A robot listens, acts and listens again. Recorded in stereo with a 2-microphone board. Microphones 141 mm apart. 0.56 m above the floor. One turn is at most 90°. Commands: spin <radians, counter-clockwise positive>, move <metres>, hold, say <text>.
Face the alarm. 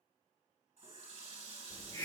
hold
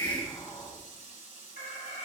spin 1.13
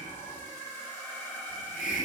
spin 0.17
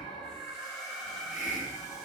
say Found it: an alarm, straight ahead, 1 to 2 m away.